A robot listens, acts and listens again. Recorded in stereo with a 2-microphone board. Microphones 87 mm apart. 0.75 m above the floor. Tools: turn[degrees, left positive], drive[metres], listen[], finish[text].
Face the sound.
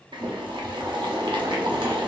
Thought: The boiling: about 70° right or 110° right.
Action: turn[-70]
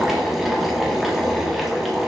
Action: finish[Facing the boiling, under 1 m away.]